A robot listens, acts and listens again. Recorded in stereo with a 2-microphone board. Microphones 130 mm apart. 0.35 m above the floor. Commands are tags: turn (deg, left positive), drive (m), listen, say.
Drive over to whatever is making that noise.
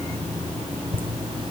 <turn deg="-40"/>
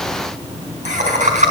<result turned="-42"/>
<turn deg="-95"/>
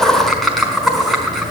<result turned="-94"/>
<drive m="1.0"/>
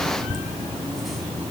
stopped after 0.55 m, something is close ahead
<say>Blocked. The laughter is further on, straight ahead.</say>